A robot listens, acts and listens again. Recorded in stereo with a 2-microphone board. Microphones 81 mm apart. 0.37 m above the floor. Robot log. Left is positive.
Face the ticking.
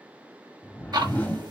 note: The ticking: about 65° right or 115° right.
cmd yaw -65
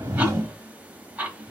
note: So it is at 20° right.
cmd yaw -20
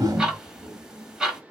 note: The ticking is now 10° right.
cmd yaw -10
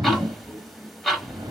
end: Facing the ticking, 1 to 2 m away.